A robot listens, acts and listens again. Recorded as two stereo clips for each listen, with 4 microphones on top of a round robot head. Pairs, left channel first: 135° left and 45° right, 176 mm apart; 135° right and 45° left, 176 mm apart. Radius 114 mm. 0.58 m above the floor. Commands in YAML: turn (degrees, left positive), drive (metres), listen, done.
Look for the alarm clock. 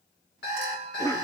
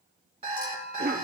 turn: 105
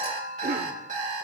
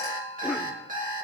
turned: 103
done: "Facing the alarm clock, 2 to 4 m away."